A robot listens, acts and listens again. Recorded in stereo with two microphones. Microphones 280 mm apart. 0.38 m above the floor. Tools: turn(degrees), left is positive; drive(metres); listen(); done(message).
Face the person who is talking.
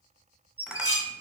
listen()
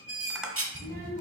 turn(degrees=-35)
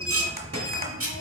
turn(degrees=-105)
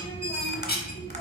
turn(degrees=10)
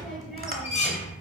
done("Found it: a child speaking, straight ahead, 1 to 2 m away.")